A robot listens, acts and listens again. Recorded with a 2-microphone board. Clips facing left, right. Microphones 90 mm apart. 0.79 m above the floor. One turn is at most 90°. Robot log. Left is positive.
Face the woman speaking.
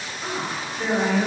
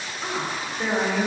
note: The woman speaking: about 20° right or 160° right.
cmd yaw -20
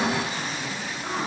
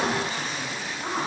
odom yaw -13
note: The woman speaking: about 30° right or 150° right.
cmd yaw -30
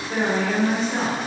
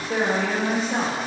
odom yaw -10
note: The woman speaking: about 40° right or 140° right.
cmd yaw -40
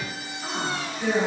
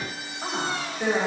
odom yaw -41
note: So it is at 105° right.
cmd yaw -90
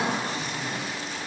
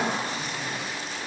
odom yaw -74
note: The woman speaking is now 30° right.
cmd yaw -30
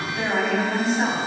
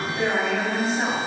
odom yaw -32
end: Facing the woman speaking.